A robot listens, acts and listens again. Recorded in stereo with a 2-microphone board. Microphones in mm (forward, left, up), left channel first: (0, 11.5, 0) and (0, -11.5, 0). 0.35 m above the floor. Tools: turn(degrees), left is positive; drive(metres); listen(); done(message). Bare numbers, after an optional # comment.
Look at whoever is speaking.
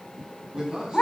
# The man speaking: about 40° right or 140° right.
turn(-40)
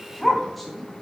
done("Found it: a man speaking, straight ahead, 2 to 4 m away.")